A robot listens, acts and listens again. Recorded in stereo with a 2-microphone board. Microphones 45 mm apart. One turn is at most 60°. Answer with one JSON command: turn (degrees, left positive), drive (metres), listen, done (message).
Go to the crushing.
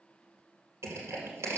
{"turn": -60}
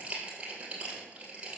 {"turn": -25}
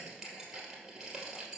{"turn": -15}
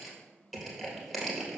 {"drive": 1.0}
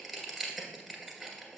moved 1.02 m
{"drive": 1.0}
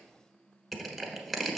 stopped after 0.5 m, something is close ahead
{"done": "I am next to the crushing."}